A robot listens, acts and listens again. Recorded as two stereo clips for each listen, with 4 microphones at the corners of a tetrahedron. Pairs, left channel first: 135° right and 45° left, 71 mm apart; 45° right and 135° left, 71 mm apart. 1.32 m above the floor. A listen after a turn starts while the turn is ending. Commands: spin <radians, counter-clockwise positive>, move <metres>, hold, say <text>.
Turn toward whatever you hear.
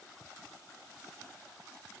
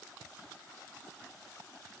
hold
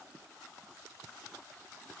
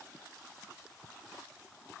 hold
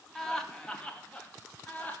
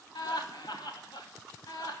spin -1.22
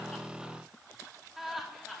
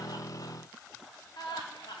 spin -0.70
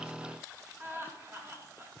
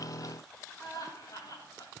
spin -0.26
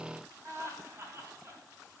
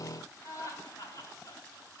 say Found it: laughter, straight ahead, 2 to 4 m away.